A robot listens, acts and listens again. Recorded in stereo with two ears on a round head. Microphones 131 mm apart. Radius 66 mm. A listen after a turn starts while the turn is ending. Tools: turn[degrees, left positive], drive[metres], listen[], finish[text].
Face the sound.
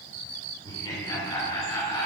Thought: The laughter: about 25° left or 155° left.
Action: turn[25]
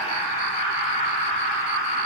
Thought: So it is at 130° left.
Action: turn[130]
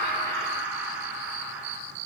Thought: The laughter is now 15° right.
Action: turn[-15]
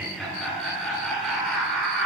Action: finish[Found it: laughter, straight ahead.]